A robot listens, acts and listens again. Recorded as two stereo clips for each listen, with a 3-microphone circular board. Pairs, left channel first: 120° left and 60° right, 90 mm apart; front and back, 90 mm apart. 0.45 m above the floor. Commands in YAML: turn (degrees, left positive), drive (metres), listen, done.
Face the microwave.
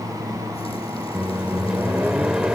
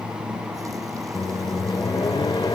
turn: 20
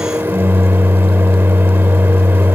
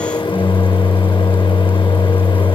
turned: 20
done: "Found it: a microwave, straight ahead."